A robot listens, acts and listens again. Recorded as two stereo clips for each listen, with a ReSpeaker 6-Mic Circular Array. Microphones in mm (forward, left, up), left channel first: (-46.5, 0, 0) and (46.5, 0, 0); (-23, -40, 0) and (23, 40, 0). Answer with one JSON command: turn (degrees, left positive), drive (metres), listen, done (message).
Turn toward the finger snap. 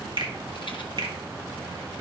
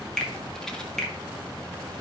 {"turn": -35}
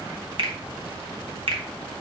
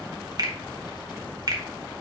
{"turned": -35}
{"turn": 15}
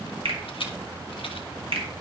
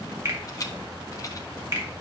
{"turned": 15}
{"done": "Facing the finger snap."}